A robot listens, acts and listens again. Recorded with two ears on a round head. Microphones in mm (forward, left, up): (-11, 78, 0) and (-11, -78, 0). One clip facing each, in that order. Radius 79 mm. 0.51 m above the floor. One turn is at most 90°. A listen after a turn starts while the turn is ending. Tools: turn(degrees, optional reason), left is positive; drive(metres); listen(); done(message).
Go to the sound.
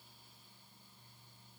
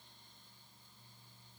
listen()
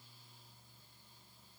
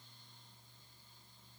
listen()
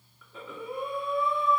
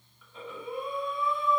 turn(degrees=70, reason="The breathing: about 70° left or 110° left.")
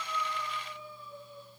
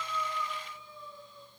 turn(degrees=45, reason="So it is at 45° left.")
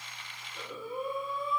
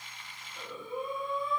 drive(metres=1.0)
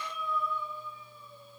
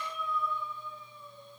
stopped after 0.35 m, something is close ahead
turn(degrees=10, reason="The breathing is now 10° left.")
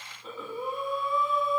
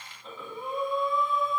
done("Blocked. The breathing is further on, straight ahead.")